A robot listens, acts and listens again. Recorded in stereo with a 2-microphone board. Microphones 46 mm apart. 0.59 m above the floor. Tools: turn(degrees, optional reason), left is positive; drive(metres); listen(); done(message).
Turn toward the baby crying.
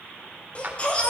turn(degrees=30, reason="The baby crying: about 30° left or 150° left.")
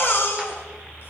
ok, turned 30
turn(degrees=120, reason="So it is at 120° left.")
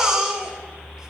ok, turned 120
turn(degrees=-20, reason="The baby crying is now 20° right.")
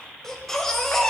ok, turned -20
done("Found it: a baby crying, straight ahead, 2 to 4 m away.")